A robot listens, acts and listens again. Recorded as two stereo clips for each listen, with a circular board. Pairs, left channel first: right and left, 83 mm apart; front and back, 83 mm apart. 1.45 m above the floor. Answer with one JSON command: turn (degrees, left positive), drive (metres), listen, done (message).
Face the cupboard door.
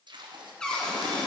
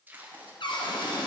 {"turn": -10}
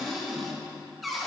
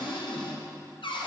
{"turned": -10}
{"done": "Found it: a cupboard door, straight ahead."}